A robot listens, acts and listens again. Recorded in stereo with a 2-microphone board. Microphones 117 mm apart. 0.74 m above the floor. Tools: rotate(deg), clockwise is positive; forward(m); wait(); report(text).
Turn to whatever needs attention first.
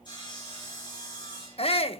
rotate(-55)
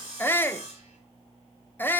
rotate(-20)
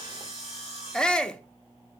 rotate(-10)
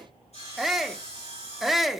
report("Found it: a shout, straight ahead, under 1 m away.")